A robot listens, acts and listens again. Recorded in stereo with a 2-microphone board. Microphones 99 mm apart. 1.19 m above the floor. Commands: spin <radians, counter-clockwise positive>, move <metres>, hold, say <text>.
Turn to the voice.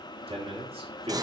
spin -1.57
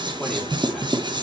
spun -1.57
hold
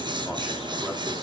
hold
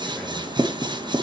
say Facing where the man speaking came from. I can't hear it now.